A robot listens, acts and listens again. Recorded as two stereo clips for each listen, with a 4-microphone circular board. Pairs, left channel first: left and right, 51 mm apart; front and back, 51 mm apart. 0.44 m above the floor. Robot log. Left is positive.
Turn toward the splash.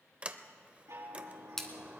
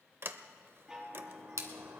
note: The splash: 175° left.
cmd yaw +175
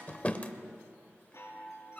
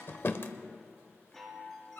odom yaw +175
end: I heard a splash from this way, but can't make it out now.